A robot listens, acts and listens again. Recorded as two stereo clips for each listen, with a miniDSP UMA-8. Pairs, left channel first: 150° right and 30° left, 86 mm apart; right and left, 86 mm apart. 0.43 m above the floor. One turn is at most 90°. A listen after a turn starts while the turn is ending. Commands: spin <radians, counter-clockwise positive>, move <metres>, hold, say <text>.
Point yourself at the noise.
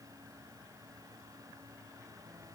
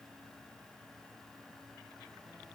hold
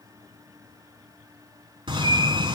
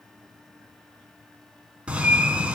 spin 0.26
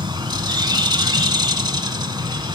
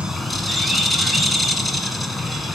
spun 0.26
say Facing the bird.